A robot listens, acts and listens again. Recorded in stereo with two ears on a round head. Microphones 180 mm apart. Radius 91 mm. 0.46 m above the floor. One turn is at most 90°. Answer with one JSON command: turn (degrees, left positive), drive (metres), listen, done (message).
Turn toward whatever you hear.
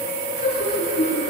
{"turn": 30}
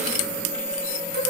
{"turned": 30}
{"listen": true}
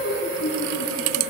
{"turn": 90}
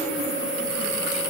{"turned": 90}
{"turn": 35}
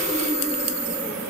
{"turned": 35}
{"listen": true}
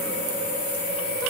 {"done": "Facing where the laughter came from. I can't hear it now."}